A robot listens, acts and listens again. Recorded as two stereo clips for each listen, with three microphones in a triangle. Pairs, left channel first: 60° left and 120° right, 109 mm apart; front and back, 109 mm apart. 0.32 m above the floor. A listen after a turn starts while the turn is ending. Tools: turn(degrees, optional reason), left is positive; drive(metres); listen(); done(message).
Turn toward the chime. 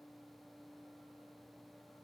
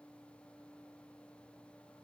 listen()
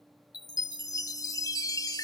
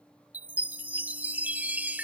turn(degrees=105, reason="The chime: 105° left.")
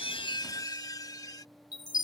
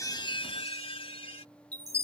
turn(degrees=10, reason="The chime is now 10° left.")
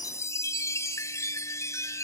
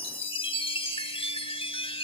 done("Found it: a chime, straight ahead.")